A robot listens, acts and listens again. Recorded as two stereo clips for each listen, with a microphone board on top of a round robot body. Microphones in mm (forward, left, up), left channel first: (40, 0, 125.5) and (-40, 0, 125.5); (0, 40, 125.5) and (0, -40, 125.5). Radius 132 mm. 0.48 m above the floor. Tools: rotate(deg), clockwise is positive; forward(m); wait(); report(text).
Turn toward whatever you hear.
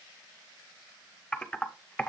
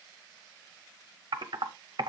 rotate(80)
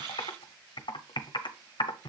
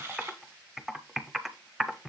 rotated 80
report("Facing the typing on a keyboard, under 1 m away.")